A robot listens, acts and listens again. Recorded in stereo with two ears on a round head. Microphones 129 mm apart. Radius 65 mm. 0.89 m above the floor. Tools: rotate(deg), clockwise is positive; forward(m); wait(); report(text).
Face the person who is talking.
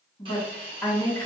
rotate(-30)
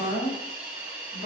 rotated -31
rotate(-150)
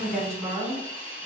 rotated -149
report("Facing the woman speaking, 2 to 4 m away.")